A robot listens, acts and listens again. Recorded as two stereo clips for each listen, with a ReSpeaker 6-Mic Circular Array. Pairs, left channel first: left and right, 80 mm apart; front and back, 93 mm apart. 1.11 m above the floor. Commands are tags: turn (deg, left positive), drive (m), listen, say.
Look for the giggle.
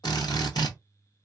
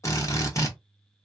<listen/>
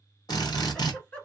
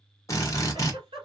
<turn deg="155"/>
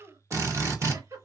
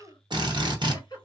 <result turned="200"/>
<turn deg="-45"/>
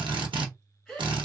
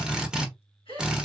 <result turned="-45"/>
<say>Facing the giggle, 2 to 4 m away.</say>